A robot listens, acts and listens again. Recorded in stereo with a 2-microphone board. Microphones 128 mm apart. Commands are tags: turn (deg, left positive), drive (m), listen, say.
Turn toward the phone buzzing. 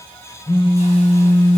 <turn deg="45"/>
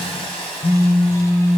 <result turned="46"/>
<turn deg="90"/>
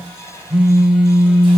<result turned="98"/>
<turn deg="-10"/>
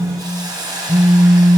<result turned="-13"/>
<say>Found it: a phone buzzing, straight ahead.</say>